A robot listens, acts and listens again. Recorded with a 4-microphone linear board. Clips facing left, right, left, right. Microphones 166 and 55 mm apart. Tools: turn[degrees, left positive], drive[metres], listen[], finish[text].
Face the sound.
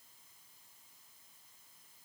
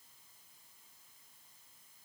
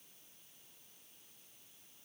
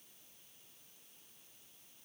Action: listen[]
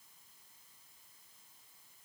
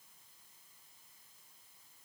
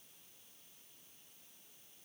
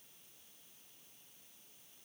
Action: listen[]
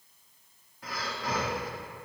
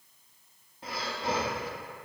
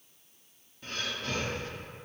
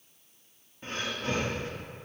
Thought: The breathing: about 25° right or 155° right.
Action: turn[-25]
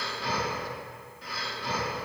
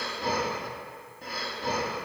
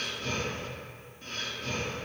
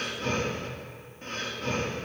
Thought: So it is at 130° right.
Action: turn[-130]
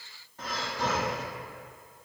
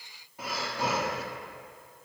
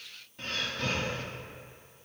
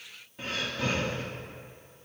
Thought: The breathing is now 10° right.
Action: turn[-10]
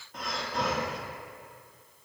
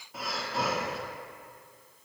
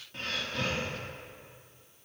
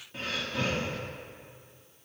Action: finish[Facing the breathing.]